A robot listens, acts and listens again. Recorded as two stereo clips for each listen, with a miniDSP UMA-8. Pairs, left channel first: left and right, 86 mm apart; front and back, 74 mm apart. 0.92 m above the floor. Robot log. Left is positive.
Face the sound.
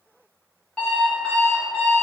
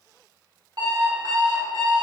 note: The alarm clock: 170° left.
cmd yaw +170
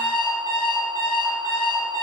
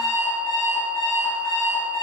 note: The alarm clock is now 60° left.
cmd yaw +60
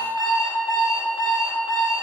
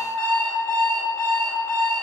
end: Facing the alarm clock.